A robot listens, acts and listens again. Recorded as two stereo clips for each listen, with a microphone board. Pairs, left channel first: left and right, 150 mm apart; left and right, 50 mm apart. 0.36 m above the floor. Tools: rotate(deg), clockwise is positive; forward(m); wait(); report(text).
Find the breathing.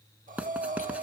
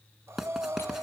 rotate(60)
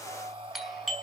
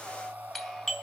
rotate(40)
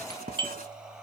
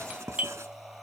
report("Facing the breathing.")